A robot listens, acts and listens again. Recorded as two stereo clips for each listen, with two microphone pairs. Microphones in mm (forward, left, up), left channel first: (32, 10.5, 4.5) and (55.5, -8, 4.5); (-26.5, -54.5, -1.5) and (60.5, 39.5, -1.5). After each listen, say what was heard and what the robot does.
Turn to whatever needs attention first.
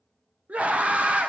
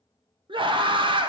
Facing the scream.